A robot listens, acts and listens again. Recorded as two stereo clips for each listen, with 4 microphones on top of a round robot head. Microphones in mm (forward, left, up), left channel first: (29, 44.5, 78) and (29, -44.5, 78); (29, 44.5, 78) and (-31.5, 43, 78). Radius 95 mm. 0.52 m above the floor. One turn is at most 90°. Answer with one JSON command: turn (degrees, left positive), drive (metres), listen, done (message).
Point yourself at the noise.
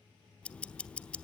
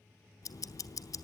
{"turn": 15}
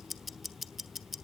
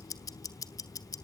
{"done": "Found it: ticking, straight ahead."}